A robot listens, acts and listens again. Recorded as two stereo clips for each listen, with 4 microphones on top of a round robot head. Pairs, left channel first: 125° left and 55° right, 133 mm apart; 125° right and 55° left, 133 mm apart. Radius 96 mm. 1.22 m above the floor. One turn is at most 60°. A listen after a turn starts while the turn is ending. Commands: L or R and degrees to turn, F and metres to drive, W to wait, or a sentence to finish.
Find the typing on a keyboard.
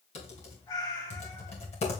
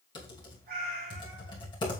L60
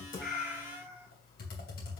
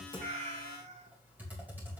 L60
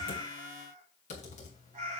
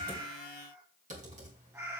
L60
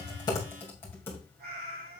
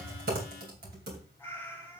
L55
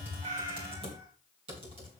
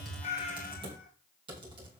Facing the typing on a keyboard.